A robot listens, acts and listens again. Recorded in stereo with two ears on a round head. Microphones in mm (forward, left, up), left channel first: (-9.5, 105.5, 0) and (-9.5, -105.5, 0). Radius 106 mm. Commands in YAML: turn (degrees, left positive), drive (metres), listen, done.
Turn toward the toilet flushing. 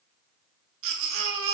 listen: true
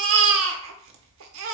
listen: true
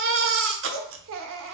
done: "I can't make out a toilet flushing, only a baby crying."